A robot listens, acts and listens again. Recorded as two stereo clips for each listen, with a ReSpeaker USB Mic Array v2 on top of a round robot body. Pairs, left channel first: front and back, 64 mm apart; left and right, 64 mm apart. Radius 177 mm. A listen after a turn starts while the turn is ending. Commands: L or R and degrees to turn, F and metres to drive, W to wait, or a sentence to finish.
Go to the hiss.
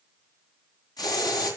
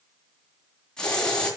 L10
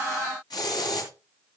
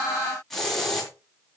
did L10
F1.0
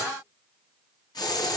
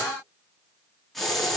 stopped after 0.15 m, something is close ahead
Blocked. The hiss is further on, straight ahead.